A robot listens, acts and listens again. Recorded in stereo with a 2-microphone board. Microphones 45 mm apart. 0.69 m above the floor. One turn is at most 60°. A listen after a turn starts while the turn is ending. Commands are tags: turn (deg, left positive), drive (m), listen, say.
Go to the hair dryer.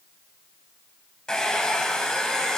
<turn deg="30"/>
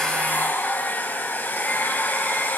<turn deg="60"/>
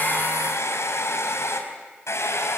<turn deg="60"/>
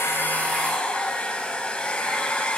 <turn deg="20"/>
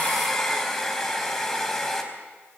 <turn deg="10"/>
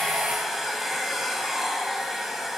<drive m="1.0"/>
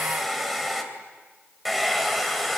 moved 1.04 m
<drive m="1.0"/>
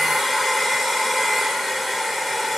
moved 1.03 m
<drive m="1.0"/>
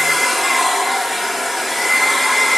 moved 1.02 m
<drive m="1.0"/>
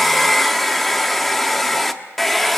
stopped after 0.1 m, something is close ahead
<say>Arrived at the hair dryer, straight ahead.</say>